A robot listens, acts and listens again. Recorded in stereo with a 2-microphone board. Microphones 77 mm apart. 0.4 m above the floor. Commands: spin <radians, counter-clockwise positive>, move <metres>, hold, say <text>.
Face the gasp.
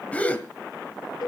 spin 0.35
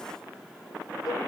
hold
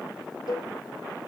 say I heard a gasp, but can't make it out now. It was about straight ahead or 140° left.